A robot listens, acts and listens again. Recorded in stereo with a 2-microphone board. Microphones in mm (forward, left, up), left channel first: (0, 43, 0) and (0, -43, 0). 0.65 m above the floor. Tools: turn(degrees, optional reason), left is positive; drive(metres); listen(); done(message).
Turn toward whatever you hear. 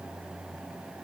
listen()
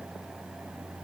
listen()
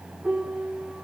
turn(degrees=-30)
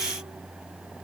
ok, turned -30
listen()
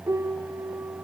turn(degrees=-140, reason="So it is at 140° right.")
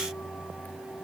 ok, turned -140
listen()
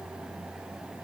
listen()
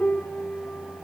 turn(degrees=25, reason="The piano is now 25° left.")
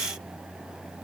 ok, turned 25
listen()
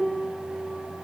done("Found it: a piano, straight ahead.")